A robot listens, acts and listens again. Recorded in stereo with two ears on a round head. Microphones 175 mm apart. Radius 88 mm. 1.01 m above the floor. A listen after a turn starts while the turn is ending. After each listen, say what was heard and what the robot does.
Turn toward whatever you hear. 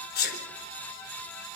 The sneeze: about 50° left or 130° left. Turn 50° left.
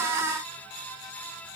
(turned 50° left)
Keep listening.
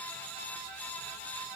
I heard a sneeze, but can't make it out now. It was about straight ahead or 80° left.